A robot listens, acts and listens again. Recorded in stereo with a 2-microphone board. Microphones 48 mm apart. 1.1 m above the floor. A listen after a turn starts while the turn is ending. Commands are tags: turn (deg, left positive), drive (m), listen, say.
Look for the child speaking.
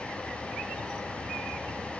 <listen/>
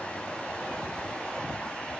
<listen/>
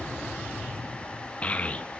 <turn deg="25"/>
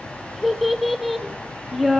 <say>Facing the child speaking, 1 to 2 m away.</say>